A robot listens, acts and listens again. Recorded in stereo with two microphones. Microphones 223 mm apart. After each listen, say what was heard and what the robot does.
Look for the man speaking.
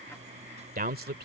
The man speaking: about 45° right or 135° right. Turn 45° right.
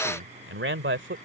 So it is at 55° right. Turn 55° right.
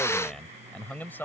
The man speaking is now 10° left. Turn 10° left.
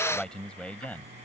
The man speaking is now 10° left. Turn 10° left.
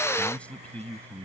The man speaking is now 10° left. Turn 10° left.
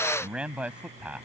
Found it: a man speaking, straight ahead.